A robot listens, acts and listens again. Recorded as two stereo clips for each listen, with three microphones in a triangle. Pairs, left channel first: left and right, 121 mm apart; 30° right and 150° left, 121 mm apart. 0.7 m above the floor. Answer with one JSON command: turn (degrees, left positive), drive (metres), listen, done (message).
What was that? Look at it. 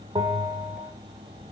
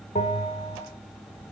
{"turn": -40}
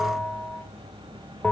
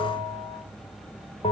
{"done": "Found it: a bell, straight ahead."}